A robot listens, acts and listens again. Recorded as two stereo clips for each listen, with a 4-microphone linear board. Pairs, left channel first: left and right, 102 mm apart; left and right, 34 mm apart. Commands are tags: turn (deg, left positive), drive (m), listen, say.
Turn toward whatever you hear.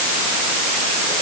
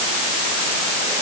<listen/>
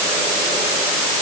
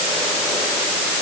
<listen/>
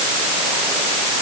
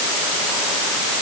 <say>I can't make out anything.</say>